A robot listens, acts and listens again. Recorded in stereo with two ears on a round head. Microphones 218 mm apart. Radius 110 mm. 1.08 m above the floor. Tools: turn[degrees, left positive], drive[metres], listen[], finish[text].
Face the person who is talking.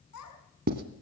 Thought: The child speaking: about 70° left or 110° left.
Action: turn[70]
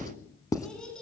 Action: finish[Found it: a child speaking, straight ahead.]